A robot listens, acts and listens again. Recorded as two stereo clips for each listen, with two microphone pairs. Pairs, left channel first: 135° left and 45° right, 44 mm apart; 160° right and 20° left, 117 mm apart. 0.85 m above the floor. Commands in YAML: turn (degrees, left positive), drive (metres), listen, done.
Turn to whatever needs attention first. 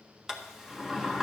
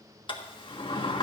listen: true
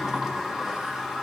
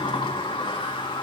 listen: true
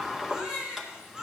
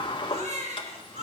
turn: 30
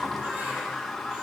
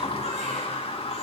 listen: true
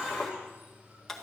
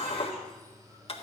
listen: true
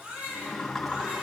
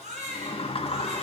turn: 10
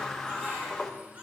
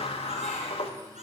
listen: true
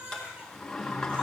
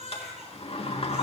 done: "Facing the baby crying."